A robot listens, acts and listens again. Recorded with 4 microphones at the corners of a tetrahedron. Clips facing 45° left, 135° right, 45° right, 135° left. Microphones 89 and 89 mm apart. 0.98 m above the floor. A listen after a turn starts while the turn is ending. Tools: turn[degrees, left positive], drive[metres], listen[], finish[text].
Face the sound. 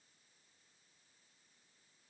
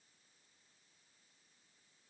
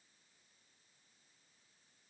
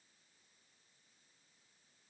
Action: listen[]
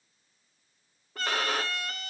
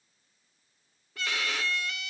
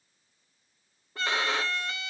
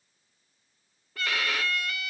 Thought: The violin: 15° left.
Action: turn[15]
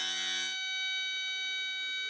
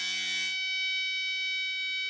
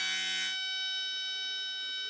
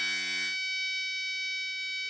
Action: finish[Facing the violin.]